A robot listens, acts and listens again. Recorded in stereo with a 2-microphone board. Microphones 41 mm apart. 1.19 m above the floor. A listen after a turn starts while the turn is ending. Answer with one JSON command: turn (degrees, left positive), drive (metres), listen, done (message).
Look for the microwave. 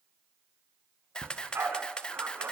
{"listen": true}
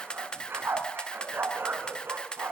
{"listen": true}
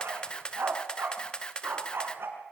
{"done": "I can't make out a microwave to turn to."}